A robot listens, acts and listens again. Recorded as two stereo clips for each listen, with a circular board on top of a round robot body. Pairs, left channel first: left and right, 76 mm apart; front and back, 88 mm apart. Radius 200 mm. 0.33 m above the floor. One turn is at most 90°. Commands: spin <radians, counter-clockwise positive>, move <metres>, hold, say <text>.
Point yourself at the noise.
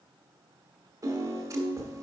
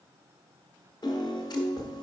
spin -0.70
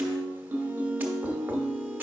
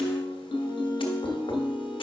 spin -0.44
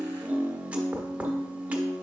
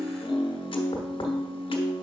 spin -0.26
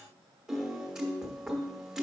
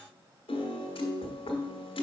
say Facing the piano.